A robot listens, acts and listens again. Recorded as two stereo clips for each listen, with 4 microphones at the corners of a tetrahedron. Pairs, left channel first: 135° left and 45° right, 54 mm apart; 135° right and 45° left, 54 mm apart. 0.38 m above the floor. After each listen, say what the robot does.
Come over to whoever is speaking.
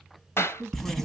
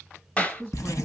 Turn 90° right.
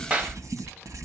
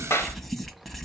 Keep listening.
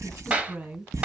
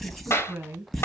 Drive 1.0 m forward.
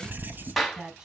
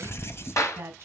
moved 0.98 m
Turn 10° left.
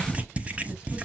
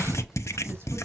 Keep listening.
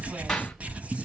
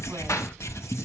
Keep listening.
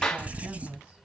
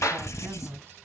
Drive 1.0 m forward.
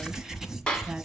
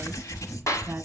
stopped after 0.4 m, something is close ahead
Keep listening.
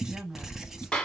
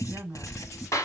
I am next to the woman speaking.